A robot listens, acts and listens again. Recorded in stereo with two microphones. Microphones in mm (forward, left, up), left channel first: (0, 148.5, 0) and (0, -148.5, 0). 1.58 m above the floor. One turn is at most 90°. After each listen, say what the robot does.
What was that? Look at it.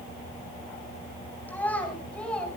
Turn 30° left.
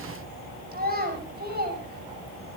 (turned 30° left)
Turn 35° right.
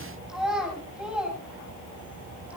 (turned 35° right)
Facing the child speaking, over 4 m away.